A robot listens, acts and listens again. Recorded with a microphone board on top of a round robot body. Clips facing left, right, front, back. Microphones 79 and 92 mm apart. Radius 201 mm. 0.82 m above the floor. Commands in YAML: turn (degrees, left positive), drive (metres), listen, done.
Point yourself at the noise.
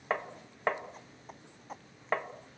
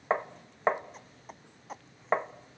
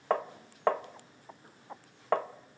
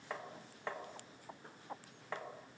turn: -25
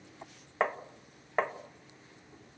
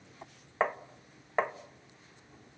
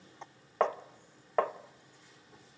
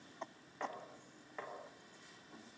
done: "Facing the tapping."